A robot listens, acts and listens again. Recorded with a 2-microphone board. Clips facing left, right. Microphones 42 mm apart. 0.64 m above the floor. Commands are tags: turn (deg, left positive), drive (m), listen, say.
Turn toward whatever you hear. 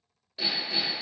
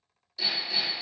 <turn deg="30"/>
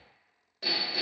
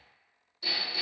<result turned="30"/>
<turn deg="120"/>
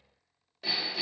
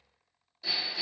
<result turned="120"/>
<turn deg="55"/>
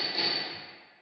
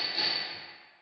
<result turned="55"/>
<turn deg="-10"/>
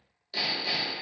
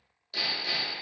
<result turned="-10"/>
<say>Found it: hammering, straight ahead.</say>